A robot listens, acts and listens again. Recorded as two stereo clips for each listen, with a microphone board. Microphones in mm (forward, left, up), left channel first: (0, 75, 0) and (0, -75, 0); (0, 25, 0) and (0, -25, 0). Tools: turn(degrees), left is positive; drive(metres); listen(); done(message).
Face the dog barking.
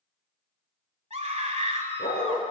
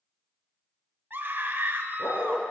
turn(degrees=90)
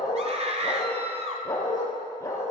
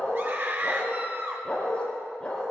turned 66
turn(degrees=20)
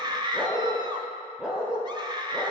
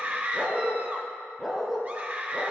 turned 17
done("Found it: a dog barking, straight ahead, over 4 m away.")